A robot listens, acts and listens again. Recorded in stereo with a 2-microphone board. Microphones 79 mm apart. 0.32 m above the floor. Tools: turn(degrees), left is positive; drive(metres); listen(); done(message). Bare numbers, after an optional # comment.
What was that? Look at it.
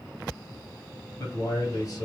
# The man speaking: about 50° left or 130° left.
turn(50)
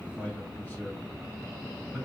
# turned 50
# So it is at 10° left.
turn(10)
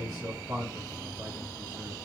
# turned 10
# The man speaking is now 10° right.
turn(-10)
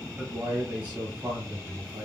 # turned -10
# The man speaking is now 25° right.
turn(-25)
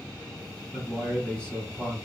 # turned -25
done("Found it: a man speaking, straight ahead, 1 to 2 m away.")